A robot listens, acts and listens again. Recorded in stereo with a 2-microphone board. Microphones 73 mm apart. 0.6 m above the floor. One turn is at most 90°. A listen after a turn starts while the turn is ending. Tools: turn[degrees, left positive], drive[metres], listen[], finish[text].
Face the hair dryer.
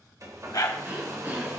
Thought: The hair dryer: about 50° right or 130° right.
Action: turn[-50]
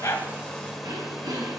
Action: finish[Facing the hair dryer, 1 to 2 m away.]